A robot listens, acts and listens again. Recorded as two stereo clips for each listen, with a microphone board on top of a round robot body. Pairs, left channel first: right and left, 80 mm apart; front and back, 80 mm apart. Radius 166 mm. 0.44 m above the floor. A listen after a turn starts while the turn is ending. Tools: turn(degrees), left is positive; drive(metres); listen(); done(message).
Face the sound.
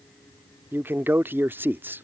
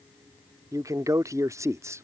turn(degrees=145)
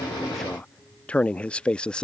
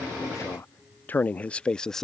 turn(degrees=-70)
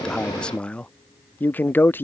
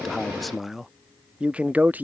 turn(degrees=-130)
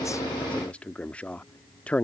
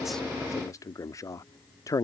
turn(degrees=-20)
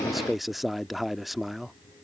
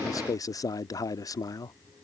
done("Facing the man speaking.")